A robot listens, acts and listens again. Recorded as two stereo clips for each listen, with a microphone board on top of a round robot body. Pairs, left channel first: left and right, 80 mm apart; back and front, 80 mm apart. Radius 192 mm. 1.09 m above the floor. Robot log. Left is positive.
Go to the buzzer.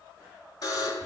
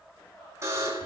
note: The buzzer: 55° left.
cmd yaw +55
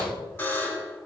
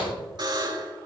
note: The buzzer is now 25° left.
cmd yaw +25
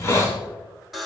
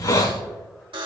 cmd fwd 1.0
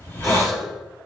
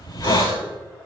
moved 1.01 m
cmd idle
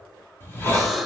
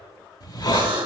cmd fwd 1.0
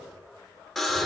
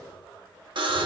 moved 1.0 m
cmd fwd 1.0
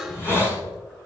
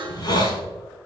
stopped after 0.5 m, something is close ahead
end: I am next to the buzzer.